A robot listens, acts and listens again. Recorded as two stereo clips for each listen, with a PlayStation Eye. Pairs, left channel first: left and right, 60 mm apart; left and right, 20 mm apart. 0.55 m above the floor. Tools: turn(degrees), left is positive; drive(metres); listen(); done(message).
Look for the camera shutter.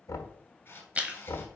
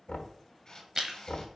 turn(degrees=35)
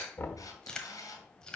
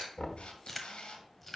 turn(degrees=105)
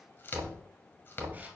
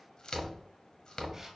listen()
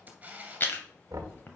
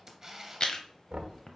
turn(degrees=-25)
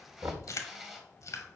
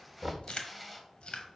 done("Found it: a camera shutter, straight ahead.")